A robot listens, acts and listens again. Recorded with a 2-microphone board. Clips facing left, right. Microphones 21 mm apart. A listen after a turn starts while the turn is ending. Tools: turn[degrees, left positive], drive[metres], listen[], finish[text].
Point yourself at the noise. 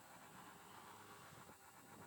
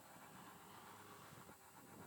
Action: listen[]
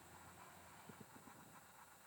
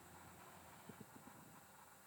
Action: listen[]
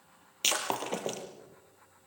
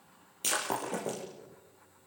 Thought: The breaking glass: about 50° left or 130° left.
Action: turn[50]
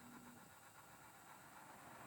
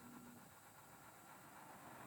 Action: listen[]
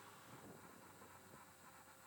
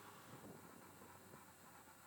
Action: finish[I heard breaking glass, but can't make it out now. It was about straight ahead or 80° left.]